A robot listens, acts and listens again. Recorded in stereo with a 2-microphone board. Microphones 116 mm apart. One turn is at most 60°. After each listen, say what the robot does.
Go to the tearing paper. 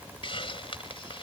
Keep listening.
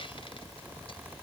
Keep listening.
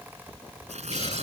Turn 60° right.
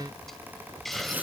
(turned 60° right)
Turn 15° right.
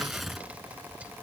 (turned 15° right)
Drive 1.0 m forward.
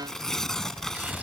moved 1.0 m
Drive 1.0 m forward.
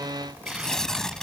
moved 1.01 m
Drive 1.0 m forward.
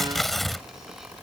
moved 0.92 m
Drive 1.0 m forward.
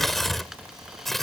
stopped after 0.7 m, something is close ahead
Arrived at the tearing paper, straight ahead.